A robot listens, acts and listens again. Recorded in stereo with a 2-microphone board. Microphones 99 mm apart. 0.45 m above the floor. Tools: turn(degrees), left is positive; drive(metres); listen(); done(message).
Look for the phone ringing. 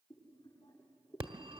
turn(degrees=-60)
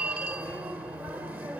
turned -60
turn(degrees=-20)
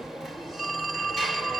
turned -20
done("Found it: a phone ringing, straight ahead, 1 to 2 m away.")